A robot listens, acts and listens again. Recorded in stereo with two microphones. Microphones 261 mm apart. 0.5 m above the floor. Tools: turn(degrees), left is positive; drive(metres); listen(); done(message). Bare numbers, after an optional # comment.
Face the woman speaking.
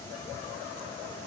listen()
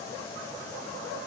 listen()
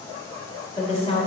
# The woman speaking: about 20° left or 160° left.
turn(20)
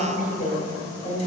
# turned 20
# The woman speaking: about 25° left or 155° left.
turn(25)
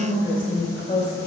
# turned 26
# So it is at 140° left.
turn(140)
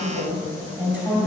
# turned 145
done("Facing the woman speaking.")